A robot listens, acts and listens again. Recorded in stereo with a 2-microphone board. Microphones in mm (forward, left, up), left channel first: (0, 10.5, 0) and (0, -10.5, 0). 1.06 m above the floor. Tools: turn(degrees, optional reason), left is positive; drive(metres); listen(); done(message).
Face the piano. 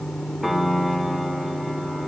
turn(degrees=-30)
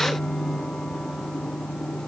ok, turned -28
listen()
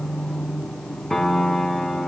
turn(degrees=20, reason="So it is at 20° left.")
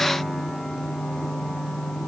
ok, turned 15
listen()
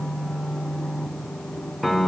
done("Facing the piano, under 1 m away.")